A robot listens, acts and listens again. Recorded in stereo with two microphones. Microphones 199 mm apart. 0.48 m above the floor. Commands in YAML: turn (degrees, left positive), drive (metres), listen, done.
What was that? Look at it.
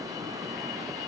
listen: true
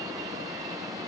listen: true
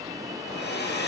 turn: 55
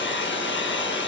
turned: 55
turn: 70
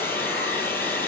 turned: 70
turn: 10
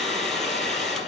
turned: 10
done: "Facing the hair dryer, 2 to 4 m away."